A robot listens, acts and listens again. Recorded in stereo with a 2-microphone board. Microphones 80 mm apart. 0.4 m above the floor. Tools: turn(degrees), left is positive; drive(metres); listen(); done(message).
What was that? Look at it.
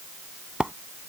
turn(degrees=-30)
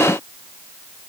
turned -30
listen()
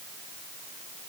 done("I heard a splash, but can't make it out now. It was about 15° left or 135° right.")